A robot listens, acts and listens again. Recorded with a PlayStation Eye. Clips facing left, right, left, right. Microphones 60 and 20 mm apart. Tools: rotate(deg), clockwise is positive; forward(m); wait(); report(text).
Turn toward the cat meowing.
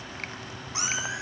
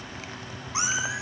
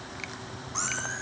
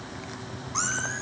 rotate(20)
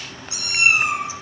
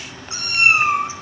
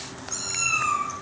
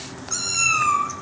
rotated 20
rotate(35)
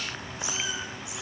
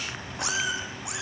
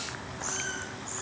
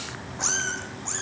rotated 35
rotate(115)
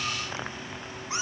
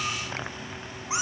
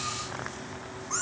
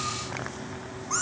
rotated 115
rotate(15)
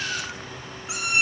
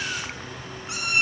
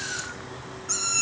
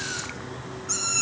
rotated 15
report("Facing the cat meowing.")